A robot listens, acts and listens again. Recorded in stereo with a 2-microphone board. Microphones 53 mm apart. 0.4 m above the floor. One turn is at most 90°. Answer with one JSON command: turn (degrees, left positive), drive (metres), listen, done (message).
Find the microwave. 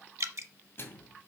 {"turn": 50}
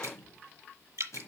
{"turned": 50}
{"turn": 80}
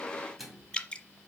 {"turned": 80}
{"done": "Found it: a microwave, straight ahead."}